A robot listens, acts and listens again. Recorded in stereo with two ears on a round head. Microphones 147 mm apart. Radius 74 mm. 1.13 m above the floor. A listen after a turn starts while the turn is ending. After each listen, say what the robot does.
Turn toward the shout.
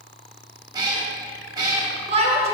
Turn 40° right.
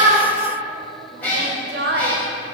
Turn 100° right.
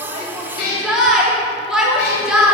Found it: a shout, straight ahead, 1 to 2 m away.